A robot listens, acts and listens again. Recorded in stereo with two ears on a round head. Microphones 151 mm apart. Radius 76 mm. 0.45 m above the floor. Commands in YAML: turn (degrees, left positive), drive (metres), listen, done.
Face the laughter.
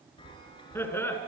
turn: 30
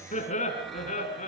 turn: 135
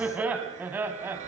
turn: -15
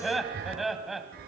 done: "Facing the laughter, 2 to 4 m away."